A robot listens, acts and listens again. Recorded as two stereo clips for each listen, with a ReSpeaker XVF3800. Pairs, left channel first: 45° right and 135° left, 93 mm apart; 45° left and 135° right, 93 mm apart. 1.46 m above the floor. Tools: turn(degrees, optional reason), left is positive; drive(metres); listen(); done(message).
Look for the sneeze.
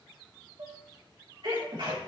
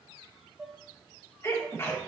turn(degrees=105, reason="The sneeze: 105° left.")
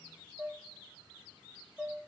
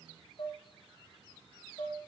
done("I heard a sneeze from this way, but can't make it out now.")